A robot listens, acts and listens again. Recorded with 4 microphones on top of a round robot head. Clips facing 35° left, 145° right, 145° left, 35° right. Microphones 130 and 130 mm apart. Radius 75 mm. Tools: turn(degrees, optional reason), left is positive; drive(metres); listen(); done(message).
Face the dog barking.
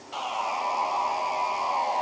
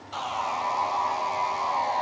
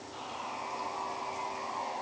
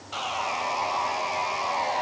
listen()
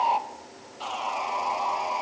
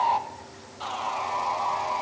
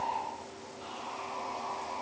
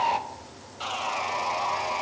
listen()
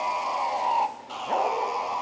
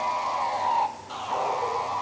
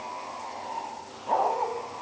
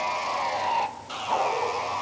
turn(degrees=75, reason="The dog barking: 75° left.")
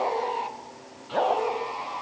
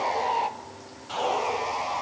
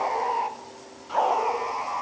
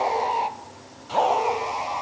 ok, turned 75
turn(degrees=35, reason="The dog barking is now 35° left.")
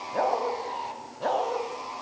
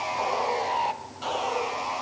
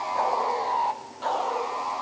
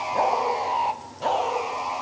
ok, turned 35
turn(degrees=25, reason="The dog barking is now 25° left.")
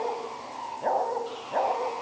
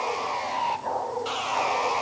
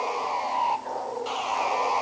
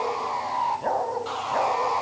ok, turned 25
done("Found it: a dog barking, straight ahead.")